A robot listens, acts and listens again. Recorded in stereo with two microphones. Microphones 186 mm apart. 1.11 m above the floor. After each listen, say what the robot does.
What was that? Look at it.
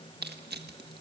Turn 60° right.
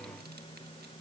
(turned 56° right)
Keep listening.
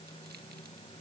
Keep listening.
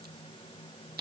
Turn 60° right.
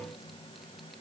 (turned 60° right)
Keep listening.
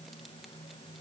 Keep listening.
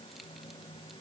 Facing where the crushing came from. I can't hear it now.